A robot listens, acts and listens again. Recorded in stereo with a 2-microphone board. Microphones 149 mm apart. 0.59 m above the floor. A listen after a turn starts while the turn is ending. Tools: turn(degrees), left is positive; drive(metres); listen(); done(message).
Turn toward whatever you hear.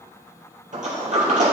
turn(degrees=-55)
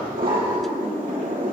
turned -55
turn(degrees=-70)
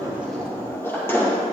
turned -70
turn(degrees=15)
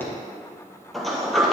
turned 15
done("Found it: a sliding door, straight ahead, 2 to 4 m away.")